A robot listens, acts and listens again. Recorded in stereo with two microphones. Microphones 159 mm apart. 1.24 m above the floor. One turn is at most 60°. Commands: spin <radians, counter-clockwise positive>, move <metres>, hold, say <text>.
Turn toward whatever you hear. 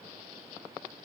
hold
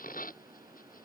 hold
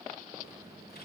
spin 1.05
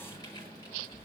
spin 0.44
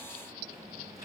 spin -0.35
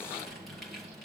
say Facing the typing on a keyboard, over 4 m away.